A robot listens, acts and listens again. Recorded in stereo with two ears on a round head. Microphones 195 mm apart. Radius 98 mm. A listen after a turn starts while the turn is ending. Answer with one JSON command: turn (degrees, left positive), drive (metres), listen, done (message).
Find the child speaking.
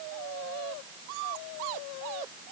{"listen": true}
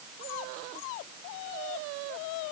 {"listen": true}
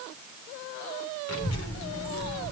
{"turn": 70}
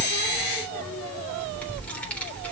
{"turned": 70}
{"done": "Found it: a child speaking, straight ahead."}